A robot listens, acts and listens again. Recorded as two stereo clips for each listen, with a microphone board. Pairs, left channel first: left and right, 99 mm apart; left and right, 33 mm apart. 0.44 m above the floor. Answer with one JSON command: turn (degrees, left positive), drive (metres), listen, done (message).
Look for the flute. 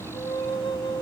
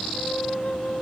{"turn": 75}
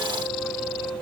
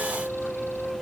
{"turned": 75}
{"done": "Facing the flute, under 1 m away."}